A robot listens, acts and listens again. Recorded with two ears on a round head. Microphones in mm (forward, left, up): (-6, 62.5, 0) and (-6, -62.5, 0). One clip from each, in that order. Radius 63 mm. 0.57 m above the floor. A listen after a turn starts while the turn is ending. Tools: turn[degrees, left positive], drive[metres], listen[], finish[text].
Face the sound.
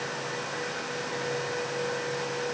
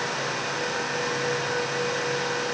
Action: listen[]
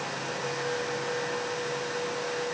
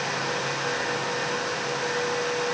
Action: listen[]
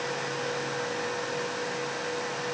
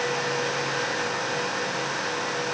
Action: finish[I can't make out anything.]